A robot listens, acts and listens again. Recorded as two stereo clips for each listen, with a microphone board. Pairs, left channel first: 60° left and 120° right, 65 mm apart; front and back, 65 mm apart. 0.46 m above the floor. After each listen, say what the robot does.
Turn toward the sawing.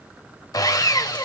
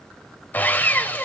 Turn 60° left.
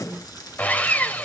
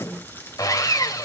Facing the sawing, 1 to 2 m away.